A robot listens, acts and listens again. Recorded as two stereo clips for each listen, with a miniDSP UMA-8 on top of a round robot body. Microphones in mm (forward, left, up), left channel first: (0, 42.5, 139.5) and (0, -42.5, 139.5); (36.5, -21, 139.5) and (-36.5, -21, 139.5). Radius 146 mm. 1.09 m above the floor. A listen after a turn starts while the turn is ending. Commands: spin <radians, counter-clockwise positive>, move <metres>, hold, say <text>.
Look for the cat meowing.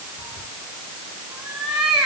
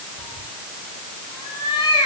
spin -0.17
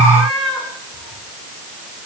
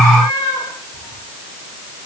say Found it: a cat meowing, straight ahead, over 4 m away.